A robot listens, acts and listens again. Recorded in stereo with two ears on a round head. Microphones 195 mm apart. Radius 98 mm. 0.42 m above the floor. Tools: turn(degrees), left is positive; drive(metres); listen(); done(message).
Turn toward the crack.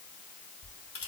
turn(degrees=30)
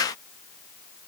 listen()
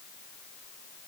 done("I heard a crack, but can't make it out now. It was about straight ahead or 120° left.")